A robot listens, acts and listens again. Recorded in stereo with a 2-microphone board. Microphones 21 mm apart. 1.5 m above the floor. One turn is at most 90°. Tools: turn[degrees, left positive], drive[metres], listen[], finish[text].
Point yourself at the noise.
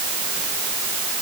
Action: listen[]
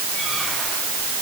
Action: listen[]
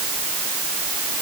Action: finish[I can't make out anything.]